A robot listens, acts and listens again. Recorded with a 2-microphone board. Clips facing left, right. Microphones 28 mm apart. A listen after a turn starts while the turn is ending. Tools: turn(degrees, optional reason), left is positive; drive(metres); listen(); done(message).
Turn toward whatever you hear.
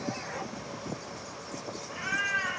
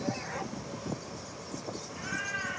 turn(degrees=40, reason="The cat meowing: about 40° left or 140° left.")
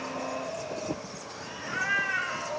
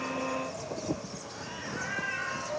turn(degrees=115, reason="So it is at 115° left.")
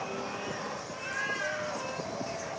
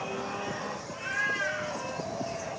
turn(degrees=-20, reason="The cat meowing is now 20° right.")
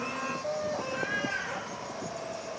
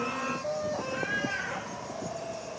done("Found it: a cat meowing, straight ahead.")